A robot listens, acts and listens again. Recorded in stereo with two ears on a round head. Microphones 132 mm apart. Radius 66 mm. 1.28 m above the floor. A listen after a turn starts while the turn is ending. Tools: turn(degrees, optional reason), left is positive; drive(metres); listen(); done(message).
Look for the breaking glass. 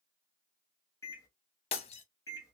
turn(degrees=45, reason="The breaking glass: about 45° left or 135° left.")
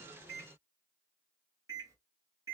listen()
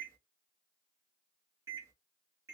done("I heard breaking glass, but can't make it out now. It was about straight ahead or 90° left.")